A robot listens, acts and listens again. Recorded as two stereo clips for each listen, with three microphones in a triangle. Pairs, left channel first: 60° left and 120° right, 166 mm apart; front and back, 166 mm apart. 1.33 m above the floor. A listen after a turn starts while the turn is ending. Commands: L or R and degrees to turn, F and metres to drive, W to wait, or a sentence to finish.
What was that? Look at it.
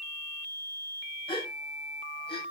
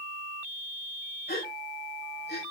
Facing the gasp, over 4 m away.